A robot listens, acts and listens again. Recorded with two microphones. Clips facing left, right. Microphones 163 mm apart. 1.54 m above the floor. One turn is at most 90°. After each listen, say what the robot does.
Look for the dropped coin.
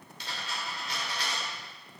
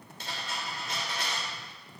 Turn 50° right.
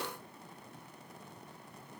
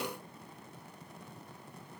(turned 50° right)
Keep listening.
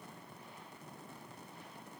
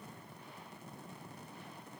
I heard a dropped coin, but can't make it out now. It was about straight ahead or 80° right.